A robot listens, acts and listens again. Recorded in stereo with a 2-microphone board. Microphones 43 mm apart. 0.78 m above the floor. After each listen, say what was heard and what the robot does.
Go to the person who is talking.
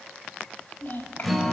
The child speaking: about 50° left or 130° left. Turn 50° left.
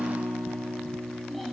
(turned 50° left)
Keep listening.
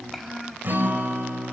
Drive 1.0 m forward.
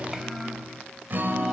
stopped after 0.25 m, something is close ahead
Keep listening.
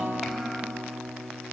Keep listening.
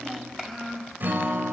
Something is in my way. I am facing the child speaking but have not reached it.